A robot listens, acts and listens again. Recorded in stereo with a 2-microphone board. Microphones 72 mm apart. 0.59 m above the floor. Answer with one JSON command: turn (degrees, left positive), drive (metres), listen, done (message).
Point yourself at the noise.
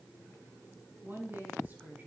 {"turn": -25}
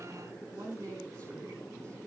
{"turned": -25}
{"turn": -130}
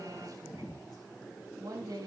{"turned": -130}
{"turn": -65}
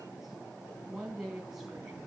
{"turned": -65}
{"turn": -10}
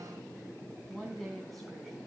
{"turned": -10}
{"done": "Facing the woman speaking, over 4 m away."}